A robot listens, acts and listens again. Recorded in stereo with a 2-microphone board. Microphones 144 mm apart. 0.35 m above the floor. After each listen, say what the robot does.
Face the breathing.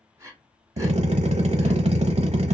Turn 25° right.
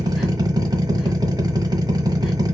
Keep listening.
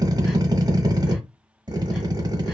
Keep listening.
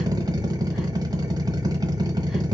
I heard breathing, but can't make it out now. It was about straight ahead or 130° right.